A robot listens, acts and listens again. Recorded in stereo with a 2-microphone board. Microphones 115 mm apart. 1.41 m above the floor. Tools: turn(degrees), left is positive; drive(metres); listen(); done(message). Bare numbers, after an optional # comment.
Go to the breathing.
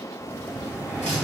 # The breathing: about 30° left or 150° left.
turn(30)
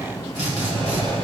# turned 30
# So it is at 120° left.
turn(120)
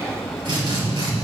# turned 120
drive(1.0)
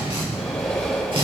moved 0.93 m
drive(1.0)
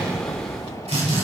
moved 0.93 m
drive(1.0)
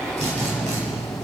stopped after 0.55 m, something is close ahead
done("Arrived at the breathing, straight ahead.")